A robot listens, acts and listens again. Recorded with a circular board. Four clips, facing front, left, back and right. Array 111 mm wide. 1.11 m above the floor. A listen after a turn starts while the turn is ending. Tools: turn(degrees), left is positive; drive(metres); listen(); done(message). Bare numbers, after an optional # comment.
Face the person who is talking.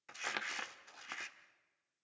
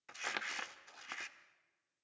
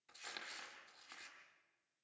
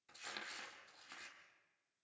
listen()
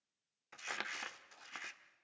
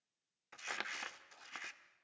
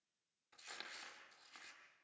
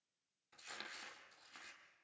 listen()
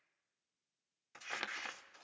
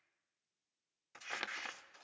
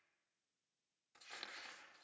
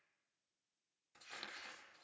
done("I can't make out anyone speaking to turn to.")